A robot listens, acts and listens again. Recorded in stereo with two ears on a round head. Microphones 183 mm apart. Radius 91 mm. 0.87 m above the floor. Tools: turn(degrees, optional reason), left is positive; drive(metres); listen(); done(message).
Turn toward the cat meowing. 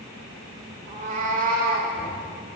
turn(degrees=-45, reason="The cat meowing: about 45° right or 135° right.")
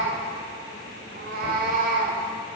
turn(degrees=-40, reason="So it is at 40° right.")
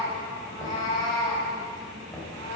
turn(degrees=20, reason="The cat meowing is now 20° left.")
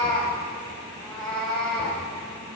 done("Facing the cat meowing.")